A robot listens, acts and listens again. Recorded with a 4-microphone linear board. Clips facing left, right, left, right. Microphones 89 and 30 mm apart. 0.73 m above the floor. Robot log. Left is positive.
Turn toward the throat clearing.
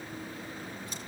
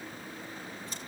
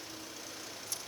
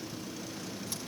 cmd idle
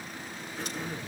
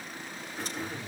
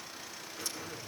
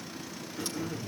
cmd yaw +30
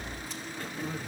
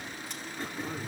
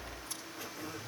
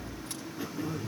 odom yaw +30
note: So it is at 30° right.
cmd yaw -30
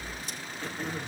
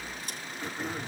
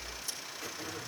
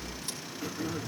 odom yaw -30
note: The throat clearing is now 15° right.
cmd yaw -15
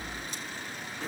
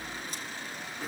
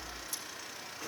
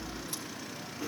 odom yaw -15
end: Facing the throat clearing, 2 to 4 m away.